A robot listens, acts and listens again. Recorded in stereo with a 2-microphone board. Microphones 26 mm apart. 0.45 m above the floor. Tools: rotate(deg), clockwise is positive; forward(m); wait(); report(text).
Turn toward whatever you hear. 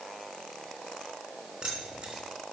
rotate(40)
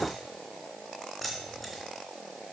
report("Found it: keys jangling, straight ahead, 2 to 4 m away.")